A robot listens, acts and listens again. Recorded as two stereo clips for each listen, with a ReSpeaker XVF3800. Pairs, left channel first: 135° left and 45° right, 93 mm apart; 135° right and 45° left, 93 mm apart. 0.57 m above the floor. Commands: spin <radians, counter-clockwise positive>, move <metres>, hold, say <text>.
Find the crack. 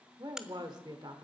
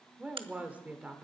spin 0.70
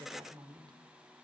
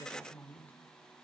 say I heard a crack from this way, but can't make it out now.